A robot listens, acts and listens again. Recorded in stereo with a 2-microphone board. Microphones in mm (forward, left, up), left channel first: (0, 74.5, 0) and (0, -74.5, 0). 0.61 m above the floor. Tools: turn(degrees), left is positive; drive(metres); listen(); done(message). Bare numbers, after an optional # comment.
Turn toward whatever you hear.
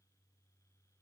listen()
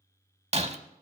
# The breaking glass: about 45° right or 135° right.
turn(-45)
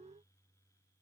listen()
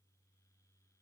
done("I heard breaking glass, but can't make it out now. It was about straight ahead or 90° right.")